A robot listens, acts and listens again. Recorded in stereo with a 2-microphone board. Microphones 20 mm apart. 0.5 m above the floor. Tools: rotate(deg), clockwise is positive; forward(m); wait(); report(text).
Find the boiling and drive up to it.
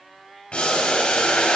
rotate(-70)
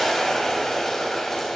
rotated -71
rotate(-15)
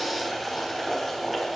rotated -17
forward(1.0)
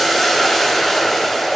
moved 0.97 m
forward(1.0)
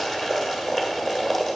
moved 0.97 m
rotate(10)
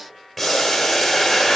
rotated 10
forward(1.0)
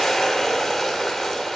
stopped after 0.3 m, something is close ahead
report("I am next to the boiling.")